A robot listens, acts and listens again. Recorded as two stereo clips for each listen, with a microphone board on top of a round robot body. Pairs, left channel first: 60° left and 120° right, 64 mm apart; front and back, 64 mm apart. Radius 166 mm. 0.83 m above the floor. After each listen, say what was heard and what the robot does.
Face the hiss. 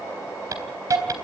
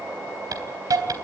The hiss: 155° right. Turn 155° right.
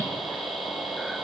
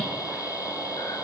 The hiss is now 30° right. Turn 30° right.
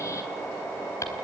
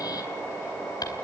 The hiss is now 15° left. Turn 15° left.
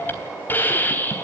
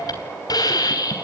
Found it: a hiss, straight ahead, 2 to 4 m away.